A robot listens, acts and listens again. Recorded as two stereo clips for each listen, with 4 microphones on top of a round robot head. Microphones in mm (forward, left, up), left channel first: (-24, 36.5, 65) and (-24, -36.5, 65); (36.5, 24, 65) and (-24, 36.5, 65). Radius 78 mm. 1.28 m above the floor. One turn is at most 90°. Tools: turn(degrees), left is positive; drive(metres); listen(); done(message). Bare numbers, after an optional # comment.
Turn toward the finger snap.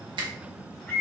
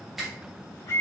# The finger snap: 105° right.
turn(-90)
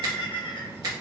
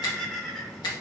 # The finger snap is now 40° right.
turn(-40)
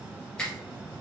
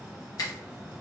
# The finger snap is now 10° left.
turn(10)
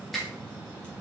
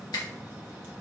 done("Found it: a finger snap, straight ahead, 1 to 2 m away.")